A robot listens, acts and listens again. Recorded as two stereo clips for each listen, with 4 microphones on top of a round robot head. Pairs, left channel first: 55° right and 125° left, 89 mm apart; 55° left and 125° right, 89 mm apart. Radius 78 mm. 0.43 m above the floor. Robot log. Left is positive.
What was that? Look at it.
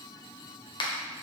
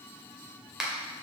note: The finger snap: 40° right.
cmd yaw -40
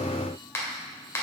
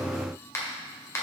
end: Found it: a finger snap, straight ahead.